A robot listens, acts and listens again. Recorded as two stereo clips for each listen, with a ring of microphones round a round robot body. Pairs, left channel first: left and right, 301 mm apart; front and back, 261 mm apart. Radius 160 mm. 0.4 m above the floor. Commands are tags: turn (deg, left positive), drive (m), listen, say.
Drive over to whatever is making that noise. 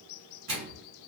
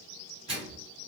<turn deg="-110"/>
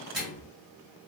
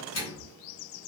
<drive m="1.0"/>
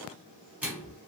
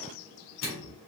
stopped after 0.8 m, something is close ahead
<turn deg="-10"/>
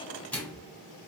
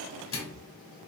<say>Arrived at the microwave, straight ahead.</say>